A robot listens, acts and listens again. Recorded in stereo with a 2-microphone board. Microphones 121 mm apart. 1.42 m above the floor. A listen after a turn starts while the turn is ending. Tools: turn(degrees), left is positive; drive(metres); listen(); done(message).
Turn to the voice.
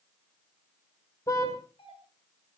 listen()
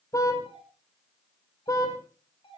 listen()
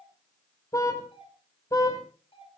done("I can't make out anyone speaking to turn to.")